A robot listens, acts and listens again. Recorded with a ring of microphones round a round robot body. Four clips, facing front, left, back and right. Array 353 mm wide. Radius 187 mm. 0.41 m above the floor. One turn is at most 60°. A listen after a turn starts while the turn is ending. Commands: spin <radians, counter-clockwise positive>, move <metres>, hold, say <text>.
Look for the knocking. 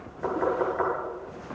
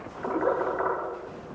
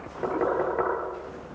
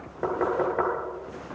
spin -1.05
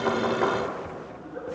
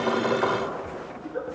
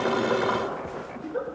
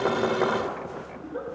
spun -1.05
spin -1.05
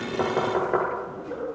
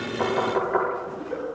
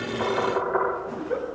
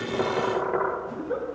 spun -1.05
spin -0.17
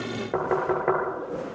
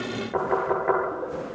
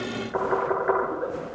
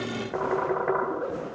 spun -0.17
say Facing the knocking.